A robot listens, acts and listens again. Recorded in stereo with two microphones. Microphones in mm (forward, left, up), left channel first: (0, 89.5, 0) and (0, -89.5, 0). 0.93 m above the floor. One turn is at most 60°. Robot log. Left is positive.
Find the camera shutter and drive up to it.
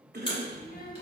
note: The camera shutter: about 30° left or 150° left.
cmd yaw +30
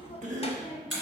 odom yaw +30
cmd fwd 1.0
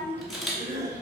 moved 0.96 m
cmd fwd 1.0
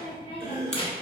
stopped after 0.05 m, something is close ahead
cmd idle
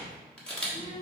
end: Arrived at the camera shutter, straight ahead.